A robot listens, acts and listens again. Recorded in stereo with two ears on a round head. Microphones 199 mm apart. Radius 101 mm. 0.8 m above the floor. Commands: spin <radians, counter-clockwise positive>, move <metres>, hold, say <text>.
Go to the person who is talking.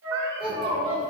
spin -0.44
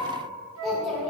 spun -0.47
move 1.0
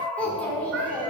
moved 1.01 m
move 1.0
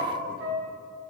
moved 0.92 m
hold
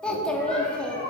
move 1.0
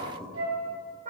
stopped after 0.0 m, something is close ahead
say I am next to the child speaking.